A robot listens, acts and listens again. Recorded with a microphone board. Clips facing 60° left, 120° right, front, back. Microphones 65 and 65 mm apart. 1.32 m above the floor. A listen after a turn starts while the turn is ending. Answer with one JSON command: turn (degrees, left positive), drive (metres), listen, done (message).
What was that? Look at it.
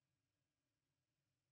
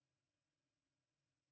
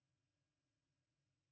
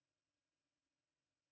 {"listen": true}
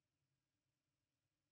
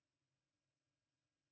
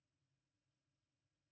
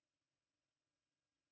{"listen": true}
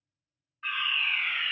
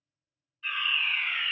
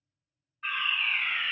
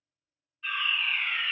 {"turn": 25}
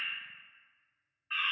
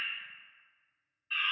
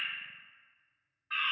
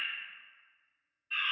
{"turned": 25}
{"done": "Facing the fire alarm."}